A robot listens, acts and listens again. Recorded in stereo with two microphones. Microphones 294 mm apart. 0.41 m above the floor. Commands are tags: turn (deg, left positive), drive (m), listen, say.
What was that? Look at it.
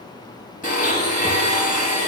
<turn deg="25"/>
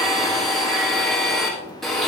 <say>Facing the blender, over 4 m away.</say>